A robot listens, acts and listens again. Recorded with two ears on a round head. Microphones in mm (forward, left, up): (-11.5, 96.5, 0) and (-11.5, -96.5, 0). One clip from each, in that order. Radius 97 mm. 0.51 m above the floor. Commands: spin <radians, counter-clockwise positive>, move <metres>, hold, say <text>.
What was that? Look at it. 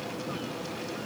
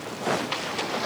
hold
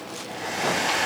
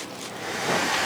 spin -0.52
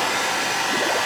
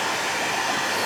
spin 0.44
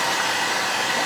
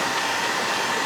spin 0.44
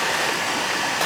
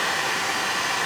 say Found it: a hair dryer, straight ahead, 2 to 4 m away.